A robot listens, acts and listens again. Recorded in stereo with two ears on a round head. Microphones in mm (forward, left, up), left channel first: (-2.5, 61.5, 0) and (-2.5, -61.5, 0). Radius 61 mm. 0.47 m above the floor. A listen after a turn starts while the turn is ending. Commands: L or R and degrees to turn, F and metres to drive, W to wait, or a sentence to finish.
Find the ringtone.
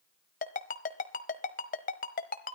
L60
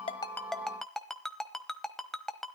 Found it: a ringtone, straight ahead, 1 to 2 m away.